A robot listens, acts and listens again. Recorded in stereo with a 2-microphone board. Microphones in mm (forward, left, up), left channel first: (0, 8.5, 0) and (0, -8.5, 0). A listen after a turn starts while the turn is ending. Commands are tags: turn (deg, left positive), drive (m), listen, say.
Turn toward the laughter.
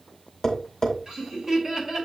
<turn deg="-25"/>
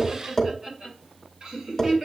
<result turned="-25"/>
<turn deg="-40"/>
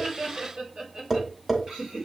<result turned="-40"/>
<turn deg="-120"/>
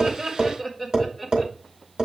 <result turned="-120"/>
<say>Facing the laughter.</say>